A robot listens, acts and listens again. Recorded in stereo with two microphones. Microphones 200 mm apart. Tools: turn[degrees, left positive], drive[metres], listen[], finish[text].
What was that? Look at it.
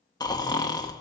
Thought: The snoring: about 20° left or 160° left.
Action: turn[20]
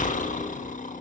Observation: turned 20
Thought: So it is at 140° left.
Action: turn[140]
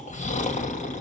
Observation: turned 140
Thought: The snoring is now 35° left.
Action: turn[35]
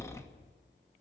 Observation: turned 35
Thought: The snoring is now 15° left.
Action: turn[15]
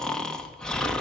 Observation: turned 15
Action: finish[Found it: snoring, straight ahead, 1 to 2 m away.]